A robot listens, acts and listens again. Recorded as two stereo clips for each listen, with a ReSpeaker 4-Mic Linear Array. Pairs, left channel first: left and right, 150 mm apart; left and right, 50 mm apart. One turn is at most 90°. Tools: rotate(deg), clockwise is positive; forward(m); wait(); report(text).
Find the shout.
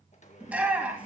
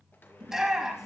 rotate(30)
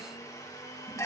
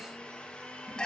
rotate(-20)
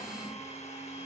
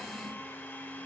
wait()
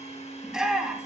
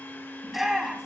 report("Facing the shout.")